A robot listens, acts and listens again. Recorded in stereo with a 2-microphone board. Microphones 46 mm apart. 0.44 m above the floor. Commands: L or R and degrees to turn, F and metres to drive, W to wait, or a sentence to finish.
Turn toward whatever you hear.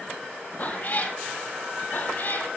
L50
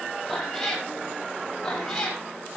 L10
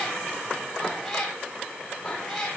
L10
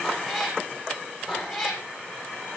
Found it: a cat meowing, straight ahead.